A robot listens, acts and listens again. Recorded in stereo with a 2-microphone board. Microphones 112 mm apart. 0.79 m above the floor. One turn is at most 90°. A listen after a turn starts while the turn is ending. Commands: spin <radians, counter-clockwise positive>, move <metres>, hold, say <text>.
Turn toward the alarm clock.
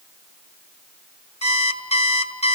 spin 1.22
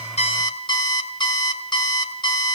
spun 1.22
spin 0.70
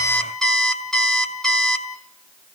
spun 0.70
say Facing the alarm clock, 1 to 2 m away.